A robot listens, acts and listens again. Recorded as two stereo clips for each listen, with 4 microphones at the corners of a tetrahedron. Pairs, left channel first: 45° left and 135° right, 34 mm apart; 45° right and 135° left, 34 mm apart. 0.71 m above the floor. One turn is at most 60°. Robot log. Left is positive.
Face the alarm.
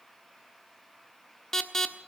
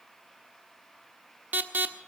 note: The alarm: 120° left.
cmd yaw +60
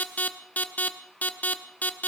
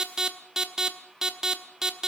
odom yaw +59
note: The alarm is now 60° left.
cmd yaw +60
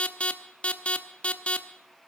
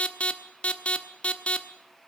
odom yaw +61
end: Found it: an alarm, straight ahead, 1 to 2 m away.